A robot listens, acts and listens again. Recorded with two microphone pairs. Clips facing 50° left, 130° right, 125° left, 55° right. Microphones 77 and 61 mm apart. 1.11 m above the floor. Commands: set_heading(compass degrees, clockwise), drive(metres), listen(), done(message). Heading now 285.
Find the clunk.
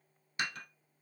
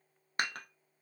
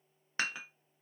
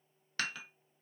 listen()
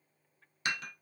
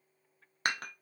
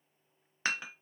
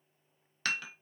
listen()
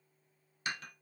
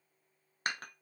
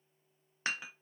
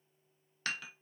done("I can't make out a clunk to turn to.")